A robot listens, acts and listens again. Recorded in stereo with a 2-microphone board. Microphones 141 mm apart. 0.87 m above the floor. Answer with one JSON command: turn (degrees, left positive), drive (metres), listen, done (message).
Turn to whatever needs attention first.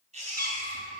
{"turn": -50}
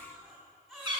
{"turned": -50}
{"done": "Found it: a baby crying, straight ahead, 2 to 4 m away."}